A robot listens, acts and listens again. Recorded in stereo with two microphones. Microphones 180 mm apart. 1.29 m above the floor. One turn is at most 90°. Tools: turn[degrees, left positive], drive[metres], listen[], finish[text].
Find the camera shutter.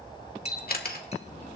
Thought: The camera shutter: about 55° left or 125° left.
Action: turn[55]
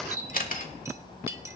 Thought: So it is at 60° left.
Action: turn[60]
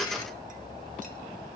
Action: listen[]
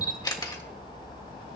Thought: The camera shutter is now 25° left.
Action: turn[25]
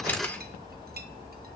Thought: The camera shutter is now 10° left.
Action: turn[10]
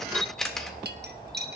Action: finish[Found it: a camera shutter, straight ahead.]